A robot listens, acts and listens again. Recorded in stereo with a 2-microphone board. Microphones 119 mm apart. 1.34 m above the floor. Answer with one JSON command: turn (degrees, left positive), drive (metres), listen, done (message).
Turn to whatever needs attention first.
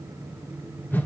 {"listen": true}
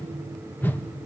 {"listen": true}
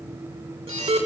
{"turn": -45}
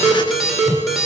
{"done": "Facing the alarm."}